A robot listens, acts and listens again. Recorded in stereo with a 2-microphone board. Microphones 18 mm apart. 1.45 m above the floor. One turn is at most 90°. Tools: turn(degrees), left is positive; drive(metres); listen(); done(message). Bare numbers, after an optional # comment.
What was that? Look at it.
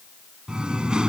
# The singing: about 60° right or 120° right.
turn(-60)
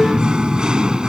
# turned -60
# So it is at 55° right.
turn(-55)
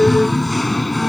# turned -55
done("Facing the singing.")